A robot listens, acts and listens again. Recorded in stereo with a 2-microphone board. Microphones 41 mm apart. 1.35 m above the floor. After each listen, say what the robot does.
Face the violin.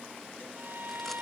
Turn 55° right.
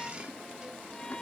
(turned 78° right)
Turn 20° left.
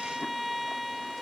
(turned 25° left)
Found it: a violin, straight ahead.